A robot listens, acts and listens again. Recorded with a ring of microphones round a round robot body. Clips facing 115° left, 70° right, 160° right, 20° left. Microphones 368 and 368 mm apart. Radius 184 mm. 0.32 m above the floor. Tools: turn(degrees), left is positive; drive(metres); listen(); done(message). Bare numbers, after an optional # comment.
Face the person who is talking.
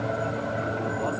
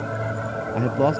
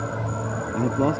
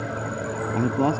# The man speaking: 60° right.
turn(-60)
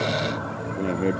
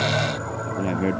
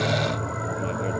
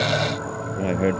# The man speaking is now 10° left.
turn(10)
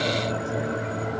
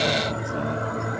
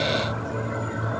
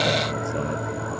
listen()
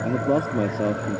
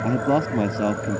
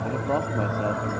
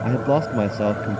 done("Facing the man speaking.")